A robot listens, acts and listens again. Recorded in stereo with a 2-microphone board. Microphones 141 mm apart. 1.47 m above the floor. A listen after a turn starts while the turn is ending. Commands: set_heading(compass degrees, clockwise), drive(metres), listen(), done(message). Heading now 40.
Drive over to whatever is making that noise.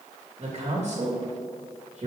set_heading(95)
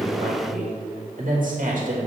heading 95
set_heading(165)
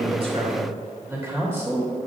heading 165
set_heading(180)
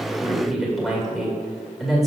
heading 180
drive(1.0)
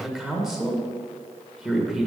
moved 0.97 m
drive(1.0)
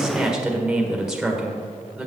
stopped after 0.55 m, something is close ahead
done("Arrived at the man speaking, straight ahead.")